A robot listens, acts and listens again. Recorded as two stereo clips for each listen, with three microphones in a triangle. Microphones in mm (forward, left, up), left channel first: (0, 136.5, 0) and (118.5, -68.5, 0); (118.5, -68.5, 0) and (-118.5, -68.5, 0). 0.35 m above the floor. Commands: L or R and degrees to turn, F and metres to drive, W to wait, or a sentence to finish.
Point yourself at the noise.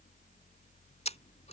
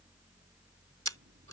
L180
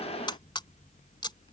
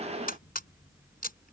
L50
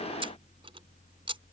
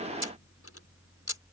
L10
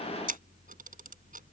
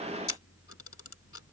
Facing the camera shutter.